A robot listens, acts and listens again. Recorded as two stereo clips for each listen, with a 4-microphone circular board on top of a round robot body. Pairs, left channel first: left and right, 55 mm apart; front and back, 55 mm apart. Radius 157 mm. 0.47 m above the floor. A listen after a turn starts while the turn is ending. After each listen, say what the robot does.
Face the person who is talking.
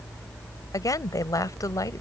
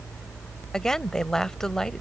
Turn 85° left.
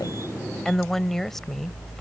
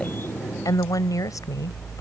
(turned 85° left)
Facing the woman speaking.